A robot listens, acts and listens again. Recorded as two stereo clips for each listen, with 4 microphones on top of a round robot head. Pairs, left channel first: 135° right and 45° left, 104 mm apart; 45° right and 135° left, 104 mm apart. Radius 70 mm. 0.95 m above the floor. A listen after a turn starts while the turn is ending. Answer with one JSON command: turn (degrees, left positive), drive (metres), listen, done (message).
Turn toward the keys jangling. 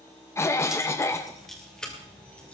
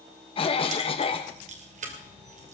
{"turn": 145}
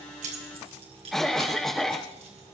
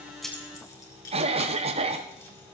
{"listen": true}
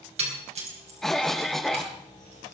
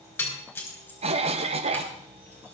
{"turn": 20}
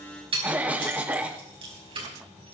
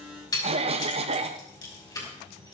{"turn": 10}
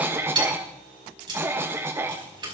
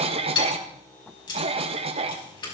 {"done": "Found it: keys jangling, straight ahead, over 4 m away."}